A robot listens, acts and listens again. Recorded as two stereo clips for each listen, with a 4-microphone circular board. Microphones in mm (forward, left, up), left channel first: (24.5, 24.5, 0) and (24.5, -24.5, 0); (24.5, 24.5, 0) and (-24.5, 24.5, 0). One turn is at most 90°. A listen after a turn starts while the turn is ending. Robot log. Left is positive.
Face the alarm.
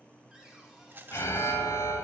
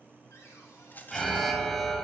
note: The alarm: 85° left.
cmd yaw +85
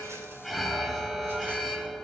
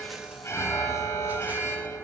end: Found it: an alarm, straight ahead.